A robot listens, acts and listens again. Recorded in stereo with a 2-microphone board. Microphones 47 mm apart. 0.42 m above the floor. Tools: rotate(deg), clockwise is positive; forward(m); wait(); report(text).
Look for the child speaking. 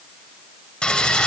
wait()
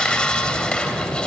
wait()
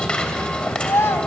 rotate(-60)
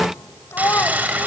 rotate(-60)
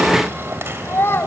rotate(-55)
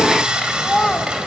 report("Facing the child speaking.")